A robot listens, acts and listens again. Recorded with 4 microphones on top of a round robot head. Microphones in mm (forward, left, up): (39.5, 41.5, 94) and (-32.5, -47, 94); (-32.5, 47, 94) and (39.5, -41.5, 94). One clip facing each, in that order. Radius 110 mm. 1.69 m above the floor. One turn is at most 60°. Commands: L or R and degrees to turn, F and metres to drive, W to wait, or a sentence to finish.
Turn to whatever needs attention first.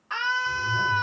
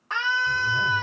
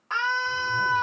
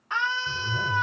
L60
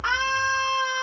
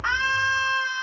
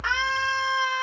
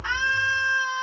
L60
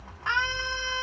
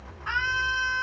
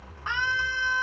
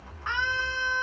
L55
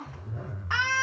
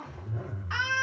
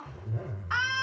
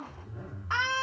Found it: a scream, straight ahead.